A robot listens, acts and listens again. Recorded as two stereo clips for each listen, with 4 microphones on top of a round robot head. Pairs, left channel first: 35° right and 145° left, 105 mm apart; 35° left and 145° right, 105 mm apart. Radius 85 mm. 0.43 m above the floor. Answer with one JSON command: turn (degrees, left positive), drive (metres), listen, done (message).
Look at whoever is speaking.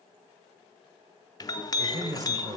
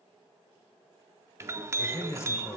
{"turn": 95}
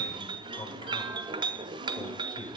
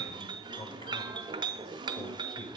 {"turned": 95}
{"done": "Facing the man speaking, 1 to 2 m away."}